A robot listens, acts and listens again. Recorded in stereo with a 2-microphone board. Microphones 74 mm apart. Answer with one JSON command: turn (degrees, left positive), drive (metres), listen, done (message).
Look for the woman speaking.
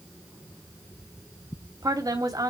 {"turn": -55}
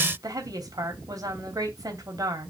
{"turn": -65}
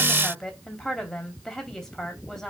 {"done": "Found it: a woman speaking, straight ahead, 2 to 4 m away."}